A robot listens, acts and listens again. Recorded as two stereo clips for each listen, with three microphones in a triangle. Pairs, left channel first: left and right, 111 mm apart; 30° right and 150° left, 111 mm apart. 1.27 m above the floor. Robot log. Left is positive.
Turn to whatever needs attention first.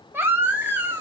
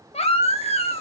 note: The baby crying: 20° right.
cmd yaw -20
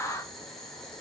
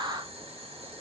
cmd idle
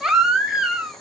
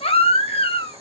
end: Facing the baby crying.